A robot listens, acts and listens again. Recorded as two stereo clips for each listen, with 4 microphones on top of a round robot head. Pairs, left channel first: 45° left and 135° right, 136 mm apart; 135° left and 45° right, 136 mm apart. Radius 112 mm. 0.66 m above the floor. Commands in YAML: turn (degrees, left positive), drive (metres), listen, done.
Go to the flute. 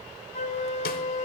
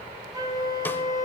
turn: 15
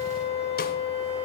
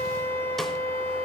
drive: 1.0
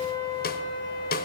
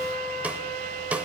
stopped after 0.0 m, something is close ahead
done: "Blocked. The flute is further on, straight ahead."